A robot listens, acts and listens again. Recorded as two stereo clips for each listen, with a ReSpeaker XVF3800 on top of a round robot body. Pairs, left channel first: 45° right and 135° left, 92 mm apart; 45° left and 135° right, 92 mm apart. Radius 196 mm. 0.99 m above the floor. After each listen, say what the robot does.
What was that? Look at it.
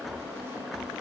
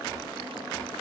Keep listening.
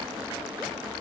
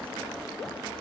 Keep listening.
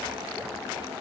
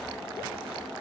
I can't make out anything.